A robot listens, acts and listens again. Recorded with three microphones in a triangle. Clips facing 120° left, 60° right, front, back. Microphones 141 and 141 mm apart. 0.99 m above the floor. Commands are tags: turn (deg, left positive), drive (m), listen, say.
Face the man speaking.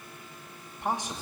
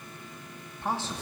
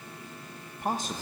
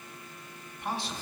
<turn deg="45"/>
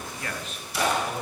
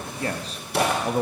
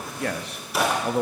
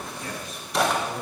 <turn deg="-20"/>
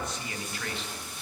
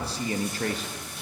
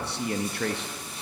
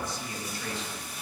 <turn deg="-20"/>
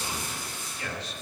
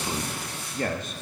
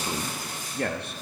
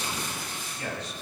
<turn deg="-25"/>
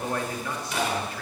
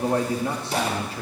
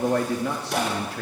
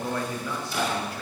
<say>Facing the man speaking, 1 to 2 m away.</say>